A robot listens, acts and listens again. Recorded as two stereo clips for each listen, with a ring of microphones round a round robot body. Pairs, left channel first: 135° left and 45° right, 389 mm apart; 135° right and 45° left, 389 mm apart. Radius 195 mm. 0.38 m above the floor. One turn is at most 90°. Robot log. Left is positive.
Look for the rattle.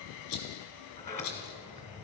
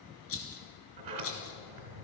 note: The rattle: 170° left.
cmd yaw +90
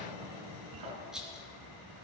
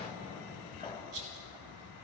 note: The rattle is now 45° left.
cmd yaw +45
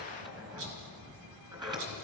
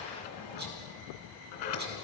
cmd idle
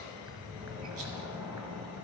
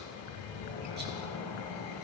cmd idle
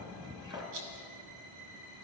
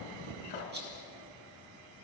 note: The rattle is now 20° right.
cmd yaw -20
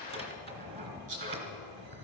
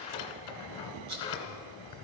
end: Found it: a rattle, straight ahead, 2 to 4 m away.